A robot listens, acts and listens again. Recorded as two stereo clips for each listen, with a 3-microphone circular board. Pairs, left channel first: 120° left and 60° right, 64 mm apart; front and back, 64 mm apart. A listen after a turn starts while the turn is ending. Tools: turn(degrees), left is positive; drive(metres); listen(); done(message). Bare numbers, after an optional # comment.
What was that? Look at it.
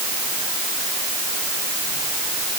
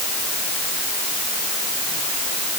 listen()
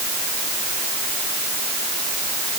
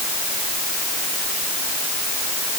listen()
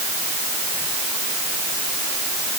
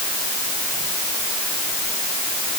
done("I can't make out anything.")